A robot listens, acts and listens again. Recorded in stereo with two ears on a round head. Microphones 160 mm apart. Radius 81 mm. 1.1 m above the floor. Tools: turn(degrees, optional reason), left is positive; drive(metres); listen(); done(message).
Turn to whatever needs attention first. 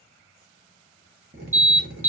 turn(degrees=-30)
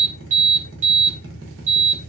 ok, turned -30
turn(degrees=-135, reason="So it is at 135° right.")
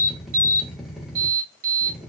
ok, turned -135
turn(degrees=-50, reason="The alarm is now 50° right.")
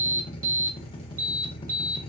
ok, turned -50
turn(degrees=-20, reason="The alarm is now 20° right.")
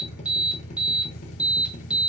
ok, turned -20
done("Found it: an alarm, straight ahead, 1 to 2 m away.")